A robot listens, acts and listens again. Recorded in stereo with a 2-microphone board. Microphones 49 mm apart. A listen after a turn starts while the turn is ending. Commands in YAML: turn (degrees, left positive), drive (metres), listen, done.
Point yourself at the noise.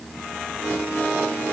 listen: true
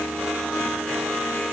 listen: true
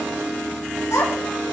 turn: 90
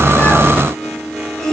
turn: 15
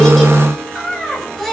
done: "Found it: a child speaking, straight ahead."